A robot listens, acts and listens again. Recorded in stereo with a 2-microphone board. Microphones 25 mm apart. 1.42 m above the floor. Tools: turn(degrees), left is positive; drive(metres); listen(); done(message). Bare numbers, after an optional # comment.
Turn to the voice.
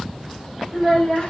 # The child speaking: about 35° left or 145° left.
turn(35)
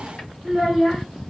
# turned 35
done("Facing the child speaking.")